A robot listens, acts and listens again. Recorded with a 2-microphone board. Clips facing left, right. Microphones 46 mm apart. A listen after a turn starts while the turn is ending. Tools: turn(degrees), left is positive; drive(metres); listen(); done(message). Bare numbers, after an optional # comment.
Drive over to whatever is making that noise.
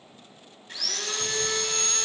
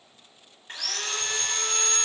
# The sawing: about 40° right or 140° right.
turn(-40)
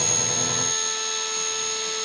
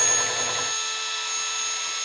# So it is at 100° right.
turn(-100)
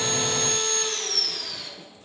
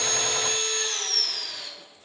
# The sawing is now 45° right.
turn(-45)
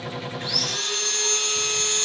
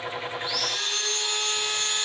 # The sawing is now 15° right.
turn(-15)
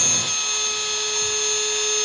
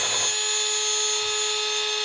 drive(1.0)
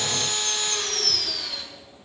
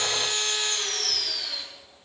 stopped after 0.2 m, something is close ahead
done("Blocked. The sawing is further on, straight ahead.")